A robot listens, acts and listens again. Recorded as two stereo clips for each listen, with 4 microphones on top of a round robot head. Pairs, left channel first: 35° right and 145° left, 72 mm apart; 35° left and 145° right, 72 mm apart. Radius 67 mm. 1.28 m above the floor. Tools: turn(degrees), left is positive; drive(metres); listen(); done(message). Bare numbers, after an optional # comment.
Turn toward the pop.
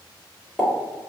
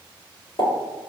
# The pop: 60° left.
turn(60)
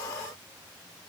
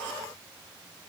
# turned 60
done("Facing where the pop came from. I can't hear it now.")